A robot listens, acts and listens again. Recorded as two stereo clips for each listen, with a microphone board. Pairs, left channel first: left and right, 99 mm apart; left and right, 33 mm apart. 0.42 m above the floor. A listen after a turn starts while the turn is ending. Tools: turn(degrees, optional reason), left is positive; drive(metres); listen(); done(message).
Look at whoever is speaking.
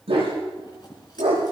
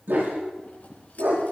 listen()
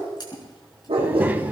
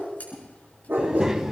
turn(degrees=-20, reason="The child speaking: about 20° right or 160° right.")
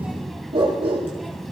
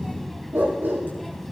done("Found it: a child speaking, straight ahead.")